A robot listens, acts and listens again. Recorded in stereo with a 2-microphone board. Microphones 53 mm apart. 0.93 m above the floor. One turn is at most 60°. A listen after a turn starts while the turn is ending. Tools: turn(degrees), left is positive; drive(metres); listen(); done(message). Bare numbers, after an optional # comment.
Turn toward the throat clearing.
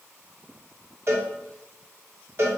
listen()
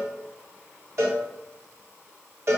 listen()
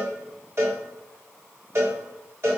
done("I can't make out throat clearing to turn to.")